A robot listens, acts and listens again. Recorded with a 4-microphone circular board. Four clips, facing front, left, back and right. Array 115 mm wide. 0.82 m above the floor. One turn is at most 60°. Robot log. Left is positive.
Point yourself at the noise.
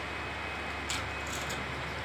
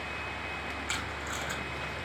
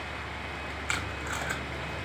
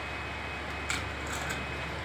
note: The tape being pulled: 175° right.
cmd yaw -60
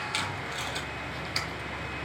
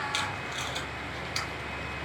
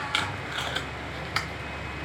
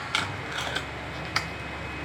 note: The tape being pulled is now 125° right.
cmd yaw -60
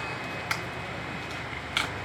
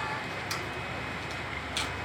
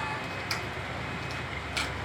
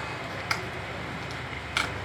note: The tape being pulled is now 65° right.
cmd yaw -60
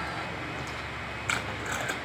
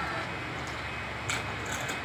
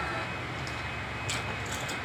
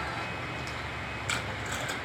end: Found it: tape being pulled, straight ahead.